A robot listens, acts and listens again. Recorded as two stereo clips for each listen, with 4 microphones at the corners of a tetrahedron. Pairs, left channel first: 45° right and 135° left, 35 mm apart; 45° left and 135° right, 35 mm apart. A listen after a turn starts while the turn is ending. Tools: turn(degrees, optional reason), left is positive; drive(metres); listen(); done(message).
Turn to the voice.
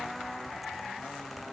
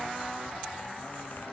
listen()
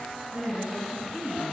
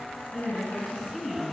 turn(degrees=130, reason="The woman speaking: 130° left.")
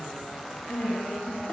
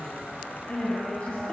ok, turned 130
done("Facing the woman speaking, 2 to 4 m away.")